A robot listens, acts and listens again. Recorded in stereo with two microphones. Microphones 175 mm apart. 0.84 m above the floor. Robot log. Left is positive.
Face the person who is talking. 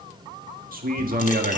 note: The man speaking: about 60° right or 120° right.
cmd yaw -60
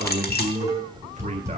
note: So it is at 50° right.
cmd yaw -50
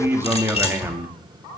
note: The man speaking is now 15° right.
cmd yaw -15
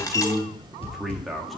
end: Facing the man speaking, 1 to 2 m away.